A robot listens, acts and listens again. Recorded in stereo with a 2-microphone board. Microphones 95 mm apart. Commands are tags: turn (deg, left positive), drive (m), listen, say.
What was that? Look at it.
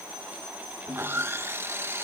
<turn deg="-25"/>
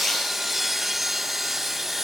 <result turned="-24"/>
<say>Facing the sawing.</say>